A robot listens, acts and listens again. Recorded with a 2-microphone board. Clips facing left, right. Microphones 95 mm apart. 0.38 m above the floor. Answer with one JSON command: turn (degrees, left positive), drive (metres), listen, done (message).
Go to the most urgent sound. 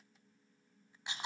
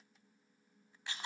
{"listen": true}
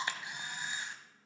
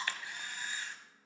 {"listen": true}
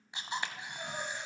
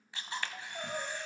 {"turn": -90}
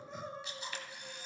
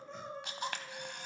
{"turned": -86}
{"drive": 1.0}
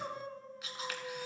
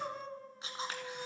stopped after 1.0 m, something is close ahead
{"done": "Arrived at the crying, straight ahead."}